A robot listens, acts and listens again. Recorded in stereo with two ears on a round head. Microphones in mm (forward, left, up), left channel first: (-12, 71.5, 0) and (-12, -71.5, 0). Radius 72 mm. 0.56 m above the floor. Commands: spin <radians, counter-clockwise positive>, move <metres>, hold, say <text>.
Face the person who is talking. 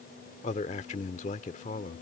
spin 0.87
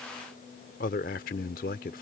spin 1.31
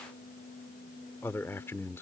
spin 0.26
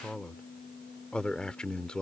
say Found it: a man speaking, straight ahead.